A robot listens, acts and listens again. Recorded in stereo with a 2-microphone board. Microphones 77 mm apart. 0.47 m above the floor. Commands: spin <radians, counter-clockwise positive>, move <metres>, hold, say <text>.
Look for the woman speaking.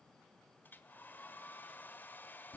hold
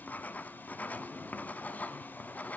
hold
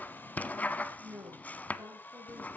spin -0.61
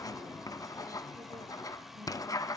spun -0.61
hold
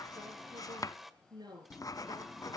spin -1.92
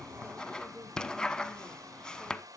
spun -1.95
hold
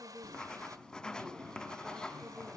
say Found it: a woman speaking, straight ahead.